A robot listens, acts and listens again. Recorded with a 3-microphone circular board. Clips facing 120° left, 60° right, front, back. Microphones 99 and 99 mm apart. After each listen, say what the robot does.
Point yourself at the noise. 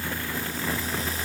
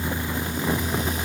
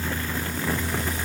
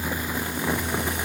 Keep listening.
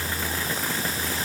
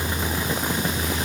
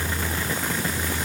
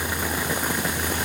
Keep listening.
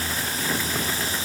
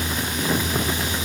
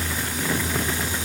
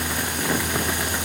I can't make out anything to turn to.